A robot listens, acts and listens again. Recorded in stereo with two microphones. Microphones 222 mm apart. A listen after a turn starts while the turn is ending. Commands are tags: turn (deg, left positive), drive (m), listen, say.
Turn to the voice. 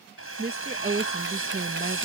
<turn deg="-45"/>
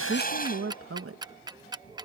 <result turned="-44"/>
<turn deg="-90"/>
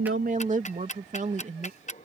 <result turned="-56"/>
<turn deg="-35"/>
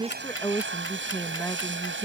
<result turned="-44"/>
<turn deg="10"/>
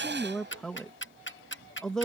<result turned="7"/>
<say>Found it: a woman speaking, straight ahead.</say>